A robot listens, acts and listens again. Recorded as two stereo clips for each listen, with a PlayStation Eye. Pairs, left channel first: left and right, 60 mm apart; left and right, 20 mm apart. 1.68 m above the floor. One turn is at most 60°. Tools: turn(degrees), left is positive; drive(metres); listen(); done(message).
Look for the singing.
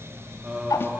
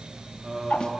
turn(degrees=-20)
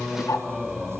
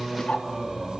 turn(degrees=30)
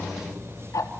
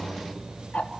turn(degrees=-35)
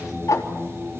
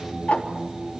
turn(degrees=-15)
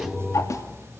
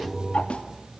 done("Facing the singing.")